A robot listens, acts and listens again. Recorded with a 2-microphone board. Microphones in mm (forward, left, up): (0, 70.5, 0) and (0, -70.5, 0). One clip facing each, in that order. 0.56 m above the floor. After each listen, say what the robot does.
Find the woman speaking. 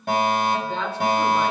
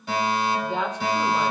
Turn 15° right.
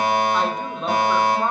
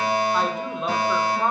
Facing the woman speaking.